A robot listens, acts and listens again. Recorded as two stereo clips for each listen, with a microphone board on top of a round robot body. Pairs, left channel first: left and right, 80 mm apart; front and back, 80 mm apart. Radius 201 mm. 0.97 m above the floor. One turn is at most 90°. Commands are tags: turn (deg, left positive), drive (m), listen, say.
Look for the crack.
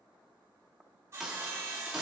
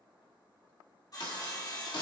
<say>Found it: a crack, straight ahead.</say>